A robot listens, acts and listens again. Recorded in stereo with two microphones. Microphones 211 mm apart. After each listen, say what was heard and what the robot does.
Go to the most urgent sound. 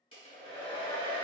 Keep listening.
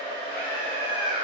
The scream: about 50° right or 130° right. Turn 50° right.
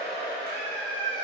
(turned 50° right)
So it is at 75° right. Turn 75° right.
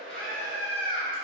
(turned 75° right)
Drive 1.0 m forward.
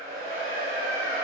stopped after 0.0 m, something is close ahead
Keep listening.
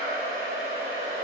Keep listening.
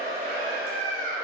The scream is now 10° left. Turn 10° left.
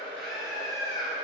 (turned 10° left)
Blocked. The scream is further on, straight ahead.